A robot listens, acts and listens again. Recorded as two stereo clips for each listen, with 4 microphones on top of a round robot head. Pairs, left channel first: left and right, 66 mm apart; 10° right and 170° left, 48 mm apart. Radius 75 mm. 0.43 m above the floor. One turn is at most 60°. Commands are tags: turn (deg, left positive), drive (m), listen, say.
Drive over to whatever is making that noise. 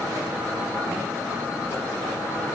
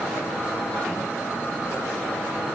<listen/>
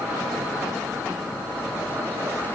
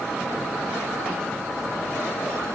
<listen/>
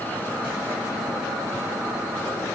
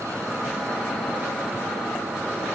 <say>I can't make out anything to turn to.</say>